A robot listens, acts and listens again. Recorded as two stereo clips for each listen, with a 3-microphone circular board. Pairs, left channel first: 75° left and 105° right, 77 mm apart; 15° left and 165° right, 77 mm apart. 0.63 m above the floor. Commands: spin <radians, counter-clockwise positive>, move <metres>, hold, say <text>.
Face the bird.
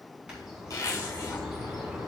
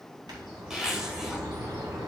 spin 3.05
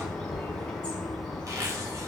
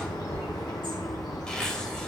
say Found it: a bird, straight ahead, over 4 m away.